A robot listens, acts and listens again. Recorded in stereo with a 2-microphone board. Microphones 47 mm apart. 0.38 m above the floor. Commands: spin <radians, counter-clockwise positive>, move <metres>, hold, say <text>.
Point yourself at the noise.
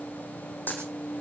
spin 0.79
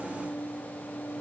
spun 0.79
hold
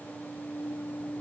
say I heard a dropped coin, but can't make it out now. It was about straight ahead or 90° left.